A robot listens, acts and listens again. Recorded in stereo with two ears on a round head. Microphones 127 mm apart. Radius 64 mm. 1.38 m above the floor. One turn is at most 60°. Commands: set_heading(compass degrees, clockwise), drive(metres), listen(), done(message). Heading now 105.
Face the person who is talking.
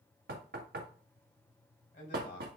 set_heading(50)
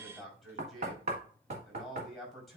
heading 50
done("Found it: a man speaking, straight ahead.")